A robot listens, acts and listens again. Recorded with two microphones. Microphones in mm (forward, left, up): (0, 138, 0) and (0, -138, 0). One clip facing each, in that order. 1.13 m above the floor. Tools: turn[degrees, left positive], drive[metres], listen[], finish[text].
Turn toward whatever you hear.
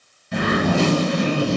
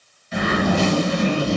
Thought: The zipper: about 60° left or 120° left.
Action: turn[60]
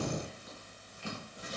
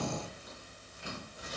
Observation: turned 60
Action: listen[]
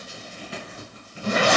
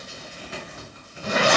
Thought: So it is at 40° left.
Action: turn[40]
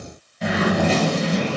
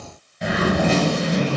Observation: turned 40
Action: finish[Found it: a zipper, straight ahead.]